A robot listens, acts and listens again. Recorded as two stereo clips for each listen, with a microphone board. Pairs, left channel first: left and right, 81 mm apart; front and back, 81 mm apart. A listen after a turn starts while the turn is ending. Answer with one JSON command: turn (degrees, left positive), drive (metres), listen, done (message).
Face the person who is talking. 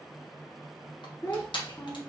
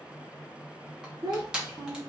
{"turn": 145}
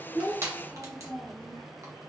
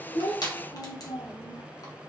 {"done": "Facing the child speaking."}